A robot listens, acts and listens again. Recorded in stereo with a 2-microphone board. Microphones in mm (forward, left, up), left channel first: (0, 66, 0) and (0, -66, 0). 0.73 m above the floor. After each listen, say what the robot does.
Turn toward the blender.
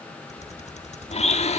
Turn 55° left.
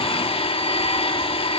Turn 55° left.
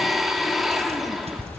Found it: a blender, straight ahead, 1 to 2 m away.